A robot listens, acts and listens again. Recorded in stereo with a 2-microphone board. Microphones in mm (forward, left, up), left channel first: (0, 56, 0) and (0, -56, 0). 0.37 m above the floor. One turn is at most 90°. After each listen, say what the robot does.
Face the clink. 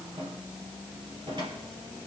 Keep listening.
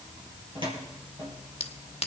Turn 60° left.
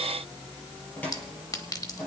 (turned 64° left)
Turn 35° left.
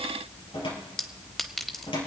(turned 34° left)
Found it: a clink, straight ahead, 1 to 2 m away.